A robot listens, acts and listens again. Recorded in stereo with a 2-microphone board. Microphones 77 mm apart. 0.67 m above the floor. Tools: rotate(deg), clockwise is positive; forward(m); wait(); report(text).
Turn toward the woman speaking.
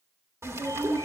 rotate(55)
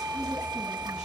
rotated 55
wait()
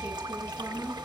report("Found it: a woman speaking, straight ahead, over 4 m away.")